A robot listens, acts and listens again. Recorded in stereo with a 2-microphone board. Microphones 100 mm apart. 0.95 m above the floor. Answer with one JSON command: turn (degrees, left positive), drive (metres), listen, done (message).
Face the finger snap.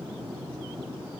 {"listen": true}
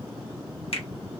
{"turn": 70}
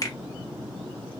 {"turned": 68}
{"turn": 40}
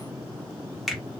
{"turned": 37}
{"done": "Facing the finger snap."}